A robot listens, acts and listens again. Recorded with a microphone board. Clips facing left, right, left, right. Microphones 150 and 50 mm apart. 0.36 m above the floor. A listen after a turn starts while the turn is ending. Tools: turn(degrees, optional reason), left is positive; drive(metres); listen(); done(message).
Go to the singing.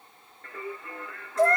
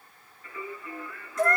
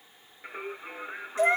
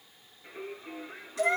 turn(degrees=65, reason="The singing: about 65° left or 115° left.")
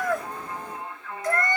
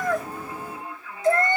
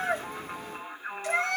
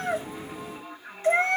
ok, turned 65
turn(degrees=45, reason="So it is at 45° left.")
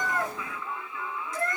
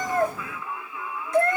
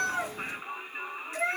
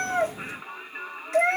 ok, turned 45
turn(degrees=-10, reason="The singing is now 10° right.")
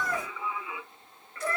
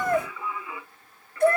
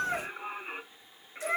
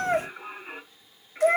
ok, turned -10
drive(metres=1.0)
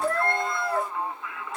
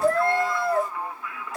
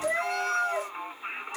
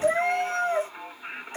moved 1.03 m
drive(metres=1.0)
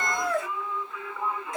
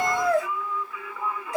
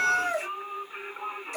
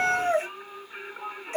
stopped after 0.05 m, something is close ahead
done("I am next to the singing.")